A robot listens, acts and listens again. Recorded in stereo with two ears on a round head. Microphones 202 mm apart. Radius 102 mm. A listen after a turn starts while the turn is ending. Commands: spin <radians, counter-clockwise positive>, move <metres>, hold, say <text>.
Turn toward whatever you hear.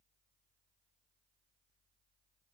hold
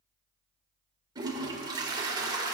spin -0.35
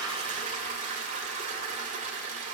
spin -2.44
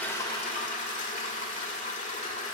spin 0.61
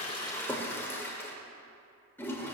spin 0.17
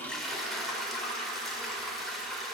say Found it: a toilet flushing, straight ahead.